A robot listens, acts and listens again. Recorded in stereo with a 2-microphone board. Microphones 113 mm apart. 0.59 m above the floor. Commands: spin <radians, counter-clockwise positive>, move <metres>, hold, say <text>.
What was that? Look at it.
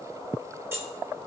spin -0.35
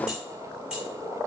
spin -0.52
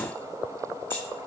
hold
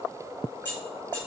spin 0.26
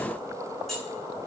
say Found it: keys jangling, straight ahead.